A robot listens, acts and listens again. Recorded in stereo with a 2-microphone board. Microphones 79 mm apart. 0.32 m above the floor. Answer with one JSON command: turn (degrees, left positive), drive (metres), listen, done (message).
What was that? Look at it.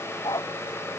{"turn": 60}
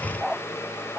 {"done": "Facing the dog barking."}